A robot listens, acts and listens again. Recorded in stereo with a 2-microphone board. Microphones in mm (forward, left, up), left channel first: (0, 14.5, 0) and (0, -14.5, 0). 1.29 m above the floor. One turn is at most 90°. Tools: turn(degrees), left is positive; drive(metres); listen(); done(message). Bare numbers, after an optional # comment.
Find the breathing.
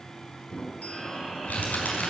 turn(30)
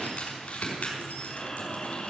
# So it is at 145° left.
turn(90)
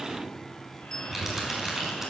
# Nothing new. It was at 55° left.
turn(55)
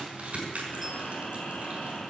# The breathing is now 40° left.
turn(40)
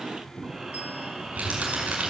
# The breathing is now 15° right.
turn(-15)
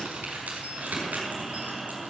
# The breathing is now 10° right.
turn(-10)
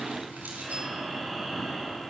done("Found it: breathing, straight ahead.")